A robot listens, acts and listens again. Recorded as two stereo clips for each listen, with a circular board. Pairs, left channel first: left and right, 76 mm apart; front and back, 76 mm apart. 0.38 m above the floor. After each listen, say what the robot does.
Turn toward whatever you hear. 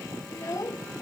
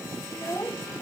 Turn 45° left.
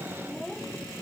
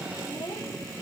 Keep listening.
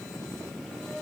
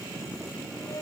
Keep listening.
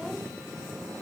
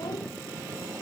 I heard a child speaking from this way, but can't make it out now.